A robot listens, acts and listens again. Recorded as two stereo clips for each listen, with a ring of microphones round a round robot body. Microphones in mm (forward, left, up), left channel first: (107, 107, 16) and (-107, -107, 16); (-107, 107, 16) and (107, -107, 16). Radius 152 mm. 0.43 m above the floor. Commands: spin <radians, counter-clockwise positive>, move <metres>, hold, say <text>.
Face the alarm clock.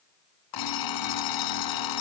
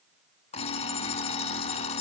spin 1.13
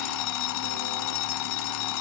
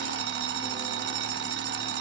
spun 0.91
spin 0.17
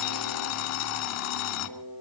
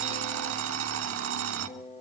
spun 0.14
say Found it: an alarm clock, straight ahead, 1 to 2 m away.